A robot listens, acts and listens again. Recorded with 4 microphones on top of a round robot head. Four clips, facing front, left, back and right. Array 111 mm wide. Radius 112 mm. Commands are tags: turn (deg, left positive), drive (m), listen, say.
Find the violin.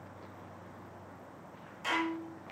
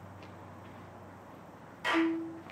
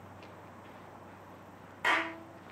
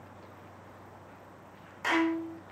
<turn deg="-110"/>
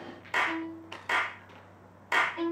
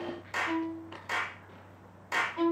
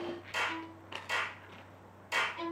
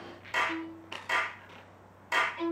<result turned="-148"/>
<turn deg="40"/>
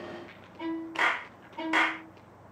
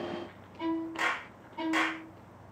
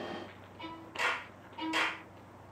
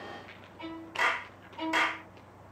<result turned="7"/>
<turn deg="30"/>
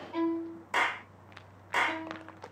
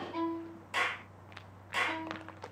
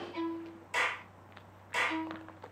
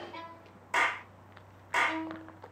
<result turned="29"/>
<say>Facing the violin.</say>